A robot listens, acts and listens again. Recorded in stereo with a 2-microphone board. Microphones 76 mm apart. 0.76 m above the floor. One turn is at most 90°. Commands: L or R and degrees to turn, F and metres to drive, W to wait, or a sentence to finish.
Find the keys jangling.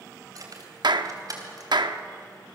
R55
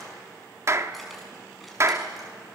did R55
W
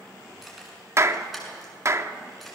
Found it: keys jangling, straight ahead.